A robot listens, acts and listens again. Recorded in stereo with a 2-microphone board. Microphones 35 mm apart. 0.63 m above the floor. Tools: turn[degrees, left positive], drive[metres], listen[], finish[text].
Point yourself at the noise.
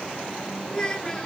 Thought: The child speaking: about 25° left or 155° left.
Action: turn[25]
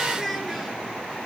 Action: finish[Facing the child speaking, over 4 m away.]